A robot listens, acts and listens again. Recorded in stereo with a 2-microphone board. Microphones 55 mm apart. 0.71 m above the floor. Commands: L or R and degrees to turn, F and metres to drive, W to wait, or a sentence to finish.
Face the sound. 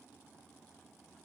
W
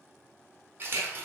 R40
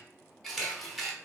Facing the camera shutter, under 1 m away.